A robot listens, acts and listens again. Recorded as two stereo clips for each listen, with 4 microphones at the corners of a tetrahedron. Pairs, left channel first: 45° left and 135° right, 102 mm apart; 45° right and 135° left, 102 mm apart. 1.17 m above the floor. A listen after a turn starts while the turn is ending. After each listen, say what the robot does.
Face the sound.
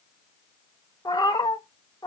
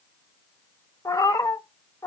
Turn 10° left.
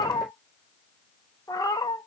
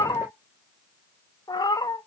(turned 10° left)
Facing the cat meowing.